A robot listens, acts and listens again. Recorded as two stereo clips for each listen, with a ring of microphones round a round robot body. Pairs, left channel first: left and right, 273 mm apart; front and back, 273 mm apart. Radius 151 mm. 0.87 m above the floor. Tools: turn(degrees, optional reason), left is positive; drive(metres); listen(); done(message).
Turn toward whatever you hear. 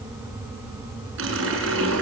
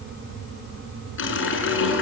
turn(degrees=-40, reason="The running tap: 40° right.")
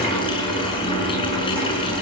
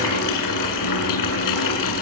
turn(degrees=15, reason="The running tap is now 15° left.")
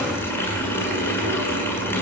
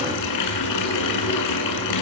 turn(degrees=10, reason="The running tap is now 10° left.")
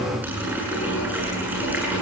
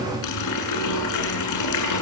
done("Found it: a running tap, straight ahead.")